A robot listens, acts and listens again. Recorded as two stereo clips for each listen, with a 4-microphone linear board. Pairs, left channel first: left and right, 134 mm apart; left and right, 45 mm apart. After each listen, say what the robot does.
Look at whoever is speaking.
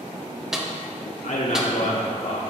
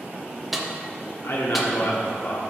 Turn 60° left.
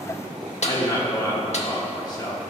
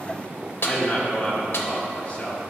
Turn 35° left.
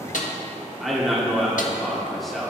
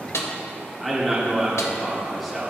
Found it: a man speaking, straight ahead, 1 to 2 m away.